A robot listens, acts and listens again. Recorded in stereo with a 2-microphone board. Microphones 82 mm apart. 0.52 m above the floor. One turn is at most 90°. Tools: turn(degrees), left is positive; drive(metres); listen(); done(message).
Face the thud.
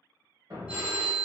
turn(degrees=-55)
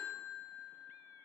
listen()
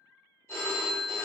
done("I heard a thud, but can't make it out now. It was about straight ahead or 70° right.")